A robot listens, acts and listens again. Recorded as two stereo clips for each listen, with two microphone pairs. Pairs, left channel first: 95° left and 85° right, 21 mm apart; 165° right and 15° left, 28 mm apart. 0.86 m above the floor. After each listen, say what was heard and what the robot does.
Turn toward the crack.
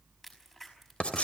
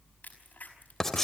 The crack: straight behind. Turn 180° left.
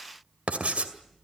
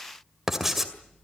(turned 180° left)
I heard a crack from this way, but can't make it out now.